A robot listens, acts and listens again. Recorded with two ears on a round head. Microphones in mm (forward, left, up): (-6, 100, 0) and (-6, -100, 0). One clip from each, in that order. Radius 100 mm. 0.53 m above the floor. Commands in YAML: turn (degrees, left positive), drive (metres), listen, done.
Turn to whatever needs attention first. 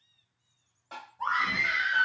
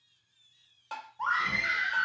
turn: -40
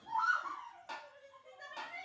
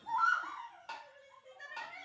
turn: -90
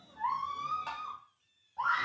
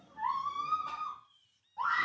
done: "Found it: a scream, straight ahead."